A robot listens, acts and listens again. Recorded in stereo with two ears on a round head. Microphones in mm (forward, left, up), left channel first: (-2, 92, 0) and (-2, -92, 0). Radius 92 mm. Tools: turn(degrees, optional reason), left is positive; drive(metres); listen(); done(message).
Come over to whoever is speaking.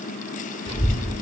turn(degrees=25, reason="The child speaking: about 25° left or 155° left.")
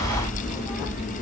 drive(metres=1.0)
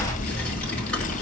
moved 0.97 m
drive(metres=1.0)
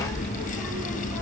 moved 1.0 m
drive(metres=1.0)
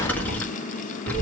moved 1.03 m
turn(degrees=10, reason="The child speaking is now 10° left.")
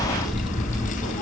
drive(metres=1.0)
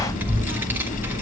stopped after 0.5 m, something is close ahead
turn(degrees=-10, reason="The child speaking is now 10° right.")
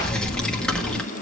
done("Arrived at the child speaking, straight ahead.")